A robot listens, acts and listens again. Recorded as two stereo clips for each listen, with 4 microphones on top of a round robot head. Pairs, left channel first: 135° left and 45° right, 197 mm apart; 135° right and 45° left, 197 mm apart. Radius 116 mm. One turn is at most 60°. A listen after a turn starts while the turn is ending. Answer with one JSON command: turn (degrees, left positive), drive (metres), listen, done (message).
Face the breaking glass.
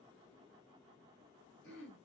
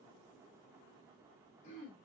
{"listen": true}
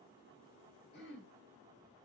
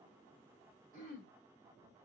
{"listen": true}
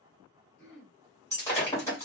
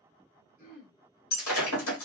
{"turn": -60}
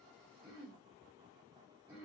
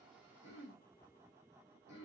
{"turn": -60}
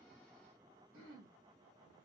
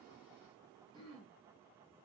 {"turn": -30}
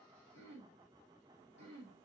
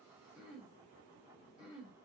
{"done": "I heard breaking glass from this way, but can't make it out now."}